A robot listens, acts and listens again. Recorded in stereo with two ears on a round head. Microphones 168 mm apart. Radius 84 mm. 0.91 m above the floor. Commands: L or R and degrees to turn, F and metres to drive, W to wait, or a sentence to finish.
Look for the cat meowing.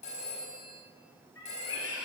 L90
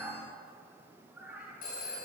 Found it: a cat meowing, straight ahead.